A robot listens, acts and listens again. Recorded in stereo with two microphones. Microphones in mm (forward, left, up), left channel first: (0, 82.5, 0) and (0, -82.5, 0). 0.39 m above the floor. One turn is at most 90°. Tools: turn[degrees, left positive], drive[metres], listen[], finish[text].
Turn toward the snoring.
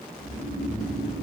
Thought: The snoring: about 35° left or 145° left.
Action: turn[35]
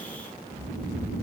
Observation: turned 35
Thought: So it is at 105° left.
Action: turn[90]
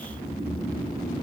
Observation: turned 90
Thought: The snoring is now 20° left.
Action: turn[20]
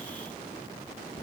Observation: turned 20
Action: finish[Facing the snoring.]